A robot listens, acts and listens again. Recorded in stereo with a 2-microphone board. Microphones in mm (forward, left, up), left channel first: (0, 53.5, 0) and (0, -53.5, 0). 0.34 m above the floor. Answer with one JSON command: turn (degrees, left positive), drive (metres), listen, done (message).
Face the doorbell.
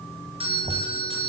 {"turn": -60}
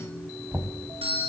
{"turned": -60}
{"turn": -60}
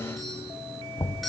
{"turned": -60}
{"done": "Found it: a doorbell, straight ahead, over 4 m away."}